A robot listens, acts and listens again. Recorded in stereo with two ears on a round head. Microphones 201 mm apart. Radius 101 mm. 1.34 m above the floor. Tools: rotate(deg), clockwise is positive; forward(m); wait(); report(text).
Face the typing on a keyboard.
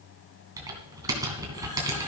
rotate(15)
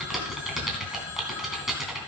report("Found it: typing on a keyboard, straight ahead, 2 to 4 m away.")